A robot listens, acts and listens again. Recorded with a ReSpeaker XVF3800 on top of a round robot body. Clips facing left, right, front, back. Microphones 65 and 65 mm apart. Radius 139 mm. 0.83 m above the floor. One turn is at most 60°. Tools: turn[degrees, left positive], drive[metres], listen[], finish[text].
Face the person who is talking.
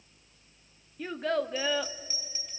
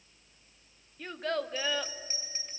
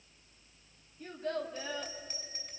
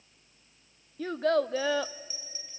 Thought: The child speaking: 175° left.
Action: turn[60]
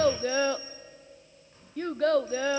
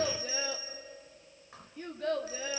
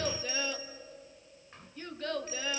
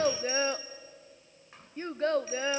Thought: The child speaking is now 120° left.
Action: turn[60]
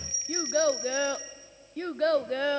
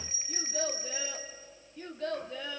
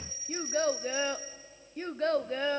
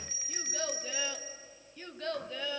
Thought: The child speaking is now 55° left.
Action: turn[55]
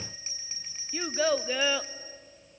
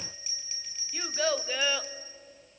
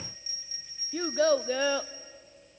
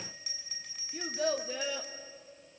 Action: finish[Facing the child speaking, under 1 m away.]